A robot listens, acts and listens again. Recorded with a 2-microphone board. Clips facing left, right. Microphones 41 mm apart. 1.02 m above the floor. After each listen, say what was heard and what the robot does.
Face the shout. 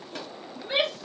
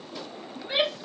Turn 30° right.
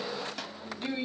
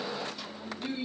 So it is at 25° left. Turn 25° left.
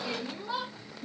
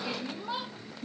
The shout is now 15° right. Turn 15° right.
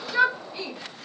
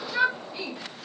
Facing the shout.